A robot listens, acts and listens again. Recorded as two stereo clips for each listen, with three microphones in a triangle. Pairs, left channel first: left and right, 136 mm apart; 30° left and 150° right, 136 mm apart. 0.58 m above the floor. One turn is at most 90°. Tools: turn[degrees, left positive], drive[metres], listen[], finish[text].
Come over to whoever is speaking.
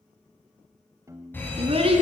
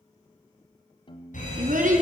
Thought: The child speaking: 135° right.
Action: turn[-90]
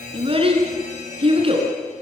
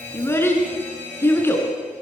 Thought: The child speaking is now 45° right.
Action: turn[-45]
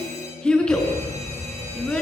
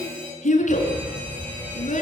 Action: drive[1.0]
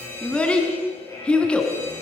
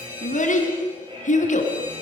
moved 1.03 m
Thought: The child speaking is now 10° left.
Action: turn[10]
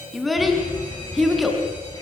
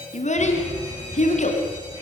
Action: drive[1.0]
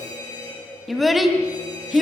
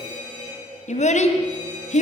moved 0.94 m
Action: drive[1.0]
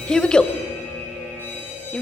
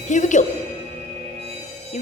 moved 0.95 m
Action: drive[1.0]
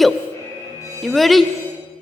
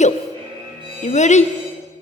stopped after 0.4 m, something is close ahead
Action: finish[I am next to the child speaking.]